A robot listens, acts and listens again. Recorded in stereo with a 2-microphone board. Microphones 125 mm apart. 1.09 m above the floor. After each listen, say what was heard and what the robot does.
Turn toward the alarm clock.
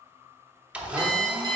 The alarm clock: about 35° right or 145° right. Turn 35° right.
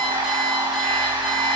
Keep listening.
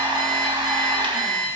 Facing the alarm clock, 1 to 2 m away.